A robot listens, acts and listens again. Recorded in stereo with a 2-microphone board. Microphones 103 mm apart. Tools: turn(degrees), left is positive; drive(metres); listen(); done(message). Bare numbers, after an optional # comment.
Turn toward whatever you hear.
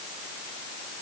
listen()
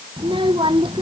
# The child speaking: about 55° right or 125° right.
turn(-55)
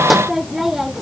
done("Facing the child speaking.")